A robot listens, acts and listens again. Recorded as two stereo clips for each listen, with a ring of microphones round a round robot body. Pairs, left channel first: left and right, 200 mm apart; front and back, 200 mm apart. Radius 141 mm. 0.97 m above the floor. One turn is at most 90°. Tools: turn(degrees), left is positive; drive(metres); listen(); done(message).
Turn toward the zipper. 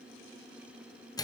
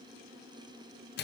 listen()
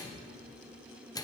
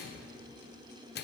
listen()
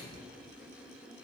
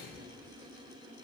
done("I can't make out a zipper to turn to.")